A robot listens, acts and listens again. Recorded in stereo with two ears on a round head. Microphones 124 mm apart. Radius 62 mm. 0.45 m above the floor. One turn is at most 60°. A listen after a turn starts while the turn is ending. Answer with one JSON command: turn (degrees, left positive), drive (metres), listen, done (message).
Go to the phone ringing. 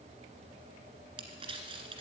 {"listen": true}
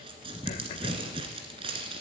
{"listen": true}
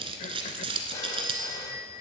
{"turn": 25}
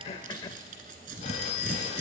{"turn": 60}
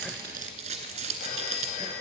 {"turn": 60}
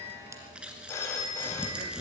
{"turn": 20}
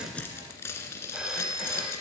{"drive": 1.0}
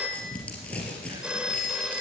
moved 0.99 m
{"turn": -10}
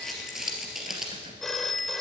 {"drive": 1.0}
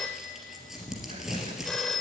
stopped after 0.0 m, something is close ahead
{"done": "Arrived at the phone ringing, straight ahead."}